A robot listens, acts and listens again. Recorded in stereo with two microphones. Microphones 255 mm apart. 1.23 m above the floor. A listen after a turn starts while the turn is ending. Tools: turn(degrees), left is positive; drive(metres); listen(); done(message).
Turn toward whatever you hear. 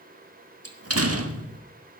turn(degrees=-75)
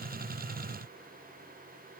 listen()
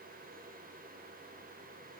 done("I heard a door slam, but can't make it out now. It was about straight ahead or 30° right.")